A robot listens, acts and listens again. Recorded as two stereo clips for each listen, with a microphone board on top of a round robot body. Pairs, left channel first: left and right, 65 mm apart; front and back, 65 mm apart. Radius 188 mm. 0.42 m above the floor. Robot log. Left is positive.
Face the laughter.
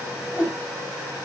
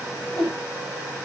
cmd idle
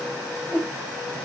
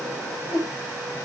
cmd idle
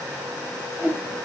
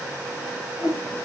end: I can't make out laughter, only a whoosh.